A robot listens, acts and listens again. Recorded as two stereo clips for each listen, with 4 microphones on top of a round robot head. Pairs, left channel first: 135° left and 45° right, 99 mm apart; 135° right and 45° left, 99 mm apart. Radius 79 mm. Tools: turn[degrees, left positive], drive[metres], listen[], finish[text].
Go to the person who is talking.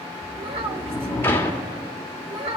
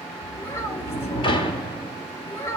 Thought: The child speaking: 70° right.
Action: turn[-70]
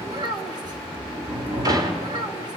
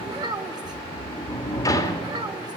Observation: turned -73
Action: drive[1.0]
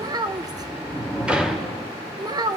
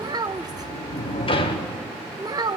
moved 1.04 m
Action: drive[1.0]
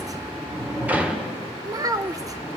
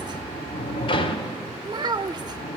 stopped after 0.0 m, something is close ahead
Action: finish[Arrived at the child speaking, straight ahead.]